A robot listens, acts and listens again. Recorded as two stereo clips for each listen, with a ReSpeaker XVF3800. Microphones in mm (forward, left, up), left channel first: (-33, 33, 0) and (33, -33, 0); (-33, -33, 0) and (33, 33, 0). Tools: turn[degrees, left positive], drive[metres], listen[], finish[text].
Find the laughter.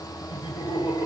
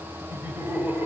Thought: The laughter: 115° left.
Action: turn[115]
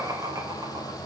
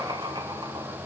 Action: finish[Found it: laughter, straight ahead, 2 to 4 m away.]